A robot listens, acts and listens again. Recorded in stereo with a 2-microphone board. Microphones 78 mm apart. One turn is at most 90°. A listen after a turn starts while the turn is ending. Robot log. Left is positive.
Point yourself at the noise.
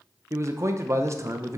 note: The man speaking: about 40° right or 140° right.
cmd yaw -40
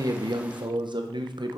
note: So it is at 100° right.
cmd yaw -90
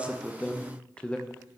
note: The man speaking is now 15° left.
cmd yaw +15
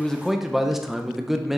end: Facing the man speaking.